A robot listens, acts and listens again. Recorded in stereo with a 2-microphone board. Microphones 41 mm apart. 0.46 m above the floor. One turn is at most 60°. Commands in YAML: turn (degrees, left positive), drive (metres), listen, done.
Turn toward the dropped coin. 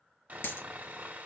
turn: 60
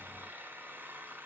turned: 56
turn: 35
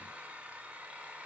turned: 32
done: "Facing where the dropped coin came from. I can't hear it now."